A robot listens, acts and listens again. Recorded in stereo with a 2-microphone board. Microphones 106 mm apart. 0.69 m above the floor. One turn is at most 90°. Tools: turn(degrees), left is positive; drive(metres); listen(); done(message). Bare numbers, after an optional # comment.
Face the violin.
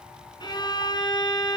# The violin: about 40° left or 140° left.
turn(40)
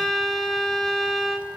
done("Facing the violin, 2 to 4 m away.")